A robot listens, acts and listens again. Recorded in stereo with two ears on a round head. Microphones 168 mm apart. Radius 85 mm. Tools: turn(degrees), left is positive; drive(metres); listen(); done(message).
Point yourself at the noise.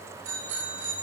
turn(degrees=-90)
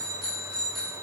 done("Found it: a bicycle bell, straight ahead, over 4 m away.")